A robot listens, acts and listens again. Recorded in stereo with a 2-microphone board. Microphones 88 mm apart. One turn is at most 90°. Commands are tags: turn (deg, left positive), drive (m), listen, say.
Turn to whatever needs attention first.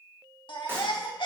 <turn deg="70"/>
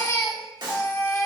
<turn deg="35"/>
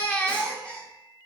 <turn deg="15"/>
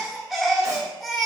<say>Facing the baby crying, 1 to 2 m away.</say>